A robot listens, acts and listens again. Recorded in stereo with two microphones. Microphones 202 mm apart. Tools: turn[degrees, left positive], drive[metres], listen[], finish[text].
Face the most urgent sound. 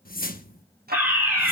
Action: turn[-30]
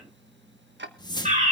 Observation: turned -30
Thought: So it is at 145° right.
Action: turn[-145]
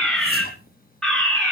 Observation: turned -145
Action: finish[Found it: a fire alarm, straight ahead, over 4 m away.]